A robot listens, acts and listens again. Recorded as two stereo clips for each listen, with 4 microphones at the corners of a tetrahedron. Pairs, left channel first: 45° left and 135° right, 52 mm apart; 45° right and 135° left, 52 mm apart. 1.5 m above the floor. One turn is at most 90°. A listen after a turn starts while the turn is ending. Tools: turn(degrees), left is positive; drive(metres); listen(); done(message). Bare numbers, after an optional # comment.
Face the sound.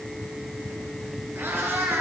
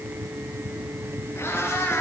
# The cat meowing: 85° right.
turn(-85)
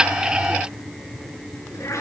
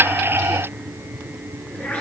# The cat meowing is now 20° left.
turn(20)
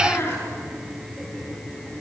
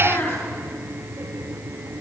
done("Found it: a cat meowing, straight ahead.")